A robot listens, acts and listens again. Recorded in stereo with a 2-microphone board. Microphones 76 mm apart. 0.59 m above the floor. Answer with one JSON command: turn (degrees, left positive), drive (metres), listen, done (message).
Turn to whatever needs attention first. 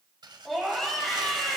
{"turn": 30}
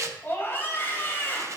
{"turn": 145}
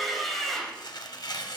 {"done": "Found it: a scream, straight ahead."}